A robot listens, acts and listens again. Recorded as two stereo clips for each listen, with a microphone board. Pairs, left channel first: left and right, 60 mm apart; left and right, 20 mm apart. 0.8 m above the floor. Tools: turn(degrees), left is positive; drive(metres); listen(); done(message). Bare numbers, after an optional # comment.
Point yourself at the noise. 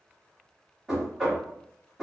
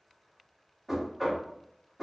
turn(-30)
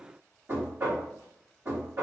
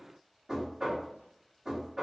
# So it is at 145° right.
turn(-145)
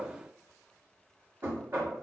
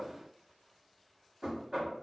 # The knocking is now 45° right.
turn(-45)
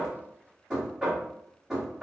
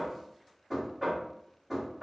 done("Facing the knocking, 1 to 2 m away.")